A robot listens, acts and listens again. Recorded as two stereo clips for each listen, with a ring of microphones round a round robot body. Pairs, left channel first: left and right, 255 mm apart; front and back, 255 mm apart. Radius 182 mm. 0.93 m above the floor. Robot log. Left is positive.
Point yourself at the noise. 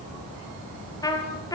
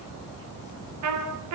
note: The trumpet: 165° left.
cmd yaw +165
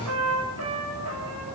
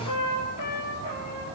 note: The trumpet is now 35° right.
cmd yaw -35
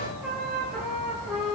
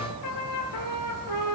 end: Facing the trumpet.